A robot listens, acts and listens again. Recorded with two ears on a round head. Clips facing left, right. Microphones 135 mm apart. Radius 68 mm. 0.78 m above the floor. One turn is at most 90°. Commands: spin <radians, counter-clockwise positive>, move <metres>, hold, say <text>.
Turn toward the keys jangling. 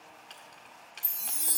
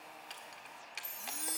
spin -0.52
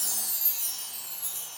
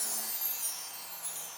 hold
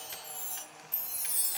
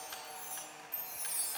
hold
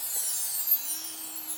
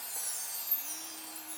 say I heard keys jangling, but can't make it out now. It was about 25° left or 145° right.